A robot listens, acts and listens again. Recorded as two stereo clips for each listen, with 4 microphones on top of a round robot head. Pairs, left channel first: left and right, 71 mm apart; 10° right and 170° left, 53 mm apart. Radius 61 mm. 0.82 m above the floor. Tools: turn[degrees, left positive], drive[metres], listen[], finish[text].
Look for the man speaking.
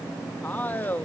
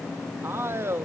Thought: The man speaking: 150° left.
Action: turn[150]
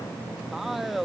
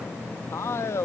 Action: finish[Facing the man speaking.]